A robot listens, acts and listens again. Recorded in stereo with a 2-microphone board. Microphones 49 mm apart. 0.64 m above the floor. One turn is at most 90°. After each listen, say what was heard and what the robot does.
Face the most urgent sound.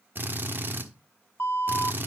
The alarm: about 55° left or 125° left. Turn 55° left.
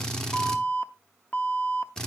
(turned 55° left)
So it is at 45° left. Turn 45° left.
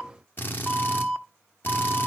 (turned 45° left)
The alarm is now 10° left. Turn 10° left.
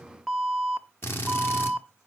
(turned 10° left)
Found it: an alarm, straight ahead.